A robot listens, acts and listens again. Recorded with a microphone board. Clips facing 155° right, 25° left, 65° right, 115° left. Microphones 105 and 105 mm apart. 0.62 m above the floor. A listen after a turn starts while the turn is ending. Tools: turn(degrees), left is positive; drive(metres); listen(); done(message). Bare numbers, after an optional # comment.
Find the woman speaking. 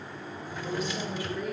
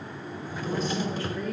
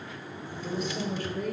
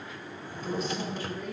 # The woman speaking: 80° right.
turn(-80)
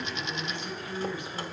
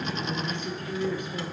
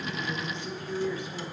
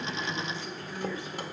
done("Facing the woman speaking.")